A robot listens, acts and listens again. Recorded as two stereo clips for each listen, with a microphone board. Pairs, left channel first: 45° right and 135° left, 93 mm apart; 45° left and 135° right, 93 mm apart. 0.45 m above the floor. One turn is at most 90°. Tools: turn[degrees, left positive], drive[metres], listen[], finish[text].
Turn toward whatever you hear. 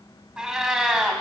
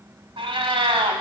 Thought: The cat meowing: 140° right.
Action: turn[-90]
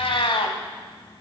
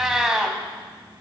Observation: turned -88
Thought: The cat meowing is now 55° right.
Action: turn[-55]
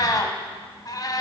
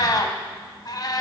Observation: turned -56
Action: finish[Facing the cat meowing.]